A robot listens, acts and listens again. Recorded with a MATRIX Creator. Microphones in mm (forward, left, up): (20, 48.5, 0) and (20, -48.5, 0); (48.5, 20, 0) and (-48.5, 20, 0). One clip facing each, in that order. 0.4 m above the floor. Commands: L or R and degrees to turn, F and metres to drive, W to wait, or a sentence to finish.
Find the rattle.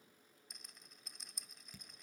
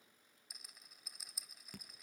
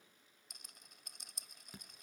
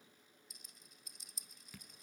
Facing the rattle, 1 to 2 m away.